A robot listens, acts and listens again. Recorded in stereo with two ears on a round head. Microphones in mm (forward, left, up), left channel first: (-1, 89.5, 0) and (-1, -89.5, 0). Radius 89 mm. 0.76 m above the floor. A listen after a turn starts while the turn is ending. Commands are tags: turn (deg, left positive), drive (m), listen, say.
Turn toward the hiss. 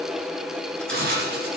<turn deg="-50"/>
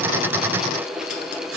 <turn deg="-75"/>
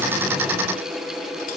<listen/>
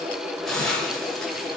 <say>Found it: a hiss, straight ahead, over 4 m away.</say>